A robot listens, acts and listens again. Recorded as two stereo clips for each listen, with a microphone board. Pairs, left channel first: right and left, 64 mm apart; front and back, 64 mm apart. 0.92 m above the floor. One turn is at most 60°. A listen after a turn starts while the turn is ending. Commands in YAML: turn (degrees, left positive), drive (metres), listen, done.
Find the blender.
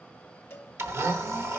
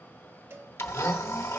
turn: 45
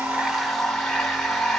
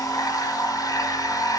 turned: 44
done: "Found it: a blender, straight ahead."